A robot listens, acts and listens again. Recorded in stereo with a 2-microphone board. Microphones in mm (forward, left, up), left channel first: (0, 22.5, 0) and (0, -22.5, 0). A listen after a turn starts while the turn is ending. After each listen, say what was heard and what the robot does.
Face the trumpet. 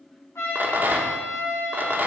Turn 90° left.
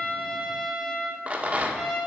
Facing the trumpet, 2 to 4 m away.